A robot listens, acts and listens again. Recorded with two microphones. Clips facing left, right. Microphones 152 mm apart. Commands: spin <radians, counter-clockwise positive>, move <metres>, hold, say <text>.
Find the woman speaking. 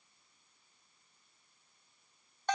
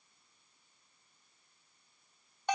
hold
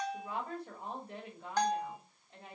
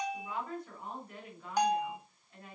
spin 0.44
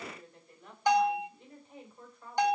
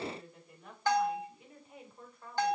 say Found it: a woman speaking, straight ahead, over 4 m away.